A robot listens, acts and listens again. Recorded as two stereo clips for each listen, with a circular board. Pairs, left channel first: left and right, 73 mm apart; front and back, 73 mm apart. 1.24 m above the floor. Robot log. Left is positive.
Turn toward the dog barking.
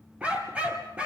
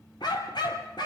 note: The dog barking: 15° right.
cmd yaw -15
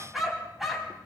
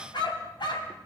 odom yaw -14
end: Facing the dog barking, 2 to 4 m away.